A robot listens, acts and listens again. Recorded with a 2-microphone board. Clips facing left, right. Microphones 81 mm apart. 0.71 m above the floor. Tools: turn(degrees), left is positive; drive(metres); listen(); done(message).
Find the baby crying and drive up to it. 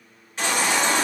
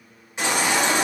turn(degrees=-20)
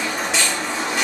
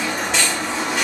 drive(metres=1.0)
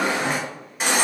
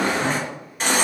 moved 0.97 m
drive(metres=1.0)
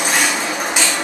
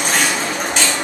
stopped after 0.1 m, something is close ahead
turn(degrees=10)
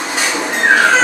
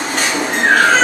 done("I am next to the baby crying.")